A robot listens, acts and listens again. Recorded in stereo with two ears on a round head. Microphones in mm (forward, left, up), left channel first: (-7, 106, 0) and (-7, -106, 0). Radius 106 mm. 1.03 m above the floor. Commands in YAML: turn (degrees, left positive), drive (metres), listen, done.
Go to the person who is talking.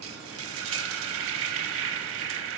listen: true
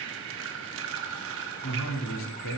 turn: 60
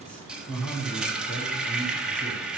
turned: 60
drive: 1.0
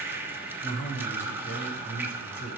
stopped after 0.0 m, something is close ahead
turn: 10
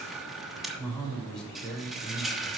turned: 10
done: "Something is in my way. I am facing the man speaking but have not reached it."